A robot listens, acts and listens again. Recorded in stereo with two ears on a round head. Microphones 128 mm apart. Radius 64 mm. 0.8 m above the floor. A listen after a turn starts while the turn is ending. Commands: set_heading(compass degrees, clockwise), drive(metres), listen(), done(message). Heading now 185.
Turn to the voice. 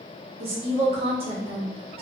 set_heading(225)
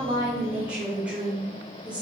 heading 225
set_heading(235)
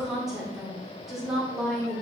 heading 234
done("Facing the woman speaking.")